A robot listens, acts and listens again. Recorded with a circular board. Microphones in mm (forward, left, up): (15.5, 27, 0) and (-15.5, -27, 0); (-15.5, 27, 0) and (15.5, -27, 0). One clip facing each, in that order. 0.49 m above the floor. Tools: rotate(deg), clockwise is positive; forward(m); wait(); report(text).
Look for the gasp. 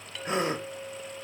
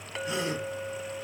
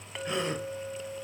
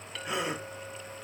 rotate(-20)
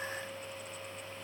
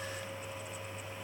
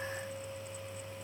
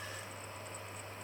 report("Facing where the gasp came from. I can't hear it now.")